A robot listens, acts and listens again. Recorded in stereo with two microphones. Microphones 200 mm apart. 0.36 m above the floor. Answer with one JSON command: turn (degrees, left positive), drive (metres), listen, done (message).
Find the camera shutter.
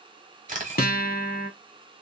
{"turn": -40}
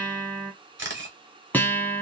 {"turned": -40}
{"turn": -95}
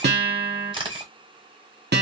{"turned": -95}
{"turn": -30}
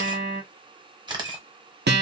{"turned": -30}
{"turn": -25}
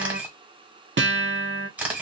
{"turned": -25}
{"turn": -10}
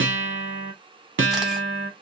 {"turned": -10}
{"listen": true}
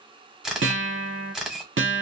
{"done": "Facing the camera shutter."}